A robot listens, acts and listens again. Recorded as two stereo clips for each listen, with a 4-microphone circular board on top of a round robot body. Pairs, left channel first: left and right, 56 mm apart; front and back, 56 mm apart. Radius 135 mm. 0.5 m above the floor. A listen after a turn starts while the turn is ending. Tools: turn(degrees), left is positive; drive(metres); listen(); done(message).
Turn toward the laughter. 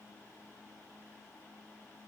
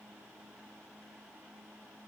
listen()
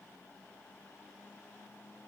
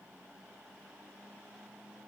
listen()
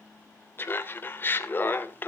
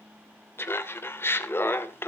turn(degrees=40)
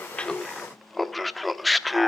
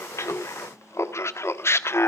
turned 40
done("Facing the laughter, 1 to 2 m away.")